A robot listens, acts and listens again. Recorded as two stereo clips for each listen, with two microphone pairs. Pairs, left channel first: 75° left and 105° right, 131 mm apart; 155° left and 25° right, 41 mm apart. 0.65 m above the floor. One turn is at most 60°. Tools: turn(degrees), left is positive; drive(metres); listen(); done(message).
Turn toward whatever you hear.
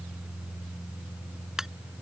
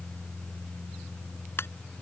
turn(degrees=60)
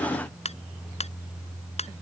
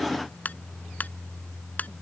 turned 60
turn(degrees=60)
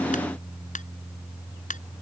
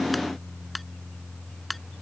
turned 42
turn(degrees=60)
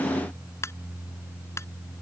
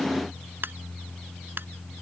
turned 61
done("Facing the ringtone.")